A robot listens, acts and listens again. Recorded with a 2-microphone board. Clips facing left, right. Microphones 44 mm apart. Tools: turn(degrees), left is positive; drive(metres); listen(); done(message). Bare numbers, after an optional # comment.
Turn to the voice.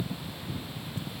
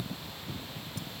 listen()
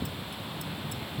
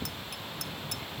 listen()
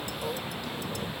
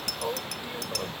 # The man speaking: about 25° right or 155° right.
turn(-25)
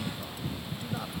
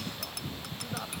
listen()
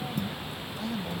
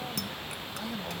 done("Facing the man speaking.")